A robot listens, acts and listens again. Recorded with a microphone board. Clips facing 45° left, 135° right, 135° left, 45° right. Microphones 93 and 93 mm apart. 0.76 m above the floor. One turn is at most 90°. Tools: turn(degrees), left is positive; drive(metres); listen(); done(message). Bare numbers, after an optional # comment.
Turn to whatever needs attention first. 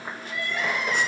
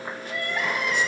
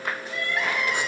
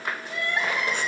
# The crying: 100° right.
turn(-90)
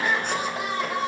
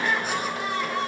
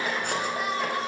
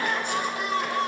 # The crying is now 25° right.
turn(-25)
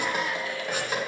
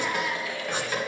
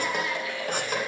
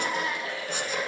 done("Facing the crying.")